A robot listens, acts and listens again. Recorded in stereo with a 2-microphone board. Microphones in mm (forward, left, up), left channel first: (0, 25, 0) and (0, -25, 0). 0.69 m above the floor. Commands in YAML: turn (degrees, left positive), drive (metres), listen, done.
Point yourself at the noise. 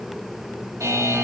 turn: -90
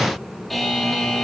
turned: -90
done: "Facing the buzzer."